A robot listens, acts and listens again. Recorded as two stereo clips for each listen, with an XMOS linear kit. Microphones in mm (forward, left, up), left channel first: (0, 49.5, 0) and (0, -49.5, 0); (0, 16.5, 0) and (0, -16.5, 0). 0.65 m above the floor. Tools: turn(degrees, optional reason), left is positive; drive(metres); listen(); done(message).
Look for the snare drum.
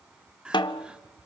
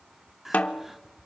turn(degrees=50, reason="The snare drum: about 50° left or 130° left.")
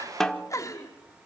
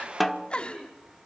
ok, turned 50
done("Facing the snare drum.")